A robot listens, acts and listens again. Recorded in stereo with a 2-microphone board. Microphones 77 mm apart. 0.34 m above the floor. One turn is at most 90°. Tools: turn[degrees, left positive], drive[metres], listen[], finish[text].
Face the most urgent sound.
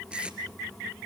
Action: listen[]
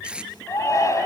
Thought: The shout: about 45° left or 135° left.
Action: turn[45]
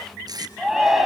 Action: finish[Found it: a shout, straight ahead.]